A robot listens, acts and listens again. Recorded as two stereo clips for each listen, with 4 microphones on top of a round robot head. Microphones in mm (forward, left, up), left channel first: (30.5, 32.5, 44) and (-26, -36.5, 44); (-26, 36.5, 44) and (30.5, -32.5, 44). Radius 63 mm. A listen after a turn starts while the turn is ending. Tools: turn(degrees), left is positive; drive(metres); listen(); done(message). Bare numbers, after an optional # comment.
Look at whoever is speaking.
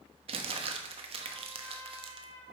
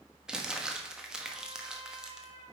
listen()
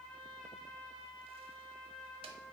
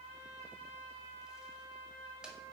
listen()
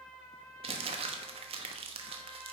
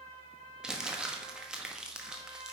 done("I can't make out anyone speaking to turn to.")